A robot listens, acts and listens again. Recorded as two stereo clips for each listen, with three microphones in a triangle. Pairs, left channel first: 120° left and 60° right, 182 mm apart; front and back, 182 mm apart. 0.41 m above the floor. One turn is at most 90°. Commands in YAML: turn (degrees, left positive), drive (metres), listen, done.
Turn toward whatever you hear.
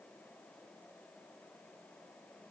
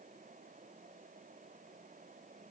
listen: true
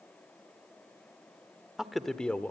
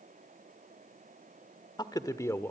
turn: 55
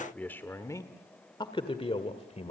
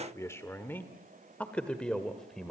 turn: 85
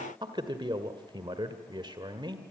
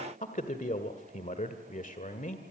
done: "Found it: a man speaking, straight ahead."